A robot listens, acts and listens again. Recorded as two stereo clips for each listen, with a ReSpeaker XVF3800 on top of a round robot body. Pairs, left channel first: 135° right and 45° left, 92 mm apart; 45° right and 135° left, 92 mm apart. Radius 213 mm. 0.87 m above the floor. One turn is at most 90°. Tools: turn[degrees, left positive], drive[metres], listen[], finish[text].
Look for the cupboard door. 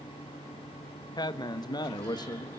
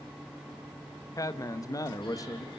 Action: listen[]
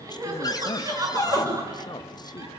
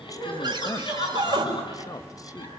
Thought: The cupboard door: 175° left.
Action: turn[90]
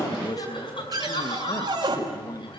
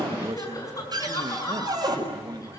Thought: The cupboard door is now 85° left.
Action: turn[85]
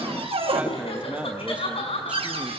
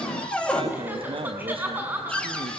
Thought: The cupboard door is now 35° left.
Action: turn[35]
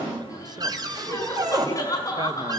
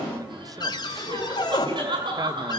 Action: finish[Facing the cupboard door, over 4 m away.]